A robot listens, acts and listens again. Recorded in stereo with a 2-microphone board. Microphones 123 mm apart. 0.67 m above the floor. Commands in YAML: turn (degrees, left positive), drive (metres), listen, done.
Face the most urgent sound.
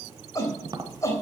turn: 25
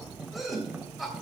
done: "Facing the shout, 2 to 4 m away."